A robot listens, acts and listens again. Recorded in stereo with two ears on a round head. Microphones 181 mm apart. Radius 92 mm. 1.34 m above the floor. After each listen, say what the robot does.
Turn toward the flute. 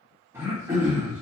Keep listening.
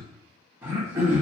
Keep listening.
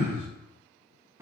I can't make out a flute to turn to.